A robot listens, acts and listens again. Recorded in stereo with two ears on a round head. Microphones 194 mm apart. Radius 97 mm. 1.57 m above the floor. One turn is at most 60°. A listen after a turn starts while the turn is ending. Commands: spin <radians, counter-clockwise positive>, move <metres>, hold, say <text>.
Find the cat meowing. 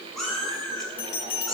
spin 0.52
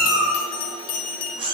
spin -0.44
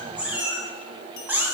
spin -0.17
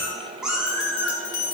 say Found it: a cat meowing, straight ahead, 1 to 2 m away.